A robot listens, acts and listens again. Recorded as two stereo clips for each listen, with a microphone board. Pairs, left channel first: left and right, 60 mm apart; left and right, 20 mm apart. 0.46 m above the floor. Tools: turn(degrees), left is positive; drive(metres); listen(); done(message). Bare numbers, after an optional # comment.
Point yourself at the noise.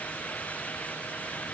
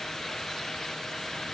listen()
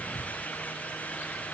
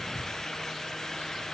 listen()
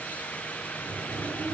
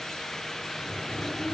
# The sliding door: about 55° right or 125° right.
turn(-55)
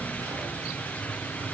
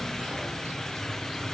# So it is at 70° right.
turn(-70)
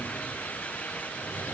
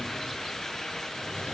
listen()
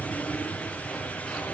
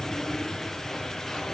# The sliding door is now 10° left.
turn(10)
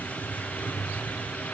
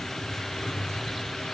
done("Facing the sliding door.")